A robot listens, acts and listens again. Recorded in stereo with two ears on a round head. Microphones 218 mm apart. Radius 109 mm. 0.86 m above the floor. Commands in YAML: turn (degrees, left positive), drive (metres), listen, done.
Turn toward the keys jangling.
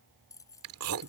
turn: 30
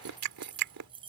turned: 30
turn: -20
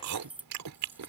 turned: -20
done: "Found it: keys jangling, straight ahead."